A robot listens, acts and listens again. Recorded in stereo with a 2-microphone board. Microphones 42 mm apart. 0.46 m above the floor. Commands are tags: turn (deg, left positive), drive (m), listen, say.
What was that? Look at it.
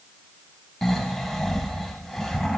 <turn deg="30"/>
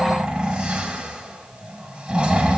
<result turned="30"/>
<turn deg="-20"/>
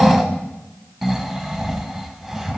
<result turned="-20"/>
<say>Facing the snoring, 1 to 2 m away.</say>